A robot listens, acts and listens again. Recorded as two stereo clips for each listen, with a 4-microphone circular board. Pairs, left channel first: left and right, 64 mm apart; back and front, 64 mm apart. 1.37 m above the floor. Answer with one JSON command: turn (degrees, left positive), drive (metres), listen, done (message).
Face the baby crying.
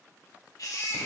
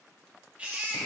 {"turn": 65}
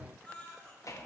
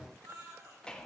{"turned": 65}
{"turn": 20}
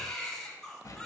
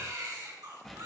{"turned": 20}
{"turn": 10}
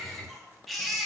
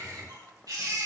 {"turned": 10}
{"done": "Found it: a baby crying, straight ahead."}